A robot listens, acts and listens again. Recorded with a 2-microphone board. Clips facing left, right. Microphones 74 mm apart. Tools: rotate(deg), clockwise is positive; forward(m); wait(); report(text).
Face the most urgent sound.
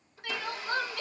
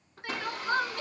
rotate(25)
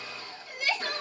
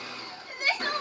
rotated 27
rotate(130)
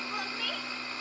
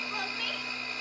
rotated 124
report("Facing the crying.")